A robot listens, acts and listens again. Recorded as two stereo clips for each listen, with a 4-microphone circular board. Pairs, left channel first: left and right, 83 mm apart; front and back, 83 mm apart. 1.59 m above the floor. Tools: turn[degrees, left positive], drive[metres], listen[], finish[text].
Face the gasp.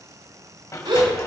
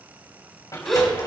Thought: The gasp: 85° right.
Action: turn[-85]
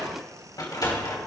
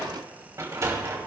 Action: finish[I heard a gasp from this way, but can't make it out now.]